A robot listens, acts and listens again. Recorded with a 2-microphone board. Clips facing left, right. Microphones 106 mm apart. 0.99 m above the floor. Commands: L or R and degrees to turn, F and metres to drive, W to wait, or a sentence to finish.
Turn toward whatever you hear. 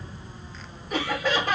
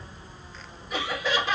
L50
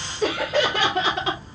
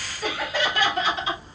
L70
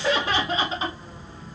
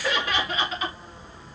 L30
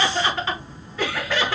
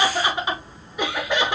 R20
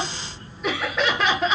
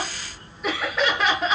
Found it: laughter, straight ahead, 1 to 2 m away.